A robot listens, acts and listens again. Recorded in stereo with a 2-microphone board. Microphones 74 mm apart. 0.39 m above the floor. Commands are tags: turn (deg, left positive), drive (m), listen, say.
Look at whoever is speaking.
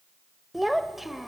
<turn deg="30"/>
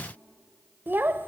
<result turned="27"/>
<turn deg="-30"/>
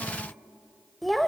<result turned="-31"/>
<say>Facing the child speaking.</say>